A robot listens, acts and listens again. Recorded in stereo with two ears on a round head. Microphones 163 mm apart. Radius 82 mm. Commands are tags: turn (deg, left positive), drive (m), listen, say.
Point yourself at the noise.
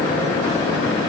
<listen/>
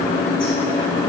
<listen/>
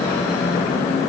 <say>I can't make out anything.</say>